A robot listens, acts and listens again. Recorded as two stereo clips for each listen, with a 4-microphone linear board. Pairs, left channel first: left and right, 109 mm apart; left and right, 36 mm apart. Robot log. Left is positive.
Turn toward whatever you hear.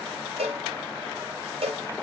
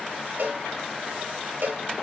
note: The cowbell: about 60° right or 120° right.
cmd yaw -60
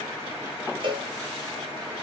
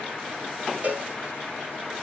note: So it is at 50° right.
cmd yaw -50
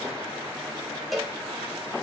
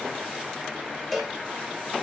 end: Facing the cowbell, 1 to 2 m away.